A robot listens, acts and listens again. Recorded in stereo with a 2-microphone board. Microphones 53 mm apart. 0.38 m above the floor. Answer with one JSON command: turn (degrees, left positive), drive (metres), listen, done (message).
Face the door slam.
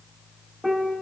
{"listen": true}
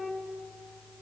{"listen": true}
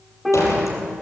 {"turn": 90}
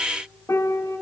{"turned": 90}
{"done": "I heard a door slam from this way, but can't make it out now."}